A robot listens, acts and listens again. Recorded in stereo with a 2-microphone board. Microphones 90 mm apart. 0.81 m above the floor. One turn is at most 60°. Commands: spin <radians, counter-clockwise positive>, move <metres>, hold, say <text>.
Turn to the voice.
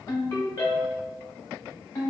hold
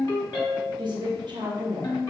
spin -0.96
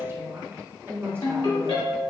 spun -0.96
spin -0.52
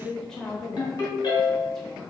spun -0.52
say Facing the woman speaking.